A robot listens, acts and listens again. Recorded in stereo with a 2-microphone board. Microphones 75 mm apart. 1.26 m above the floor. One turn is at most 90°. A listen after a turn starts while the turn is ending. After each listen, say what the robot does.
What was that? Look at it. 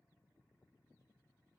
Keep listening.
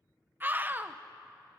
Turn 25° right.
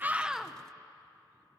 Keep listening.
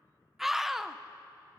Found it: a scream, straight ahead.